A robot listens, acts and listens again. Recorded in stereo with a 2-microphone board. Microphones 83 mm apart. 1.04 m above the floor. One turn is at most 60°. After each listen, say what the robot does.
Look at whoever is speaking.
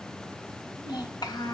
Turn 60° left.
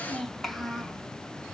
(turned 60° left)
Found it: a child speaking, straight ahead.